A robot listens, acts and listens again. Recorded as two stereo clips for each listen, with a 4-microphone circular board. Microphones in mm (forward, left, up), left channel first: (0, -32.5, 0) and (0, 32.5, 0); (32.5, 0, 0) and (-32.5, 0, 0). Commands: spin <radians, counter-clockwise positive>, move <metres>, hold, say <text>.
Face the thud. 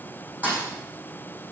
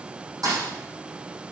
spin 2.71
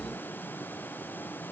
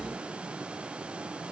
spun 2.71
say I heard a thud from this way, but can't make it out now.